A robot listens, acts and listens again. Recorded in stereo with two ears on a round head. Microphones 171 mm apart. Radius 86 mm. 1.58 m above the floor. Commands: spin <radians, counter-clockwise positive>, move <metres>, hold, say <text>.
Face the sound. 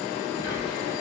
spin 1.22
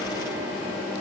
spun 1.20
spin 0.17
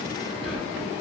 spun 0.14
say Found it: whispering, straight ahead, 1 to 2 m away.